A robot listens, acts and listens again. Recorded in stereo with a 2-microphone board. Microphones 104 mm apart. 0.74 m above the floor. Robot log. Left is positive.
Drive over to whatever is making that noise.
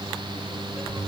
cmd idle
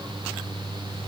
cmd idle
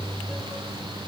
end: I can't make out anything.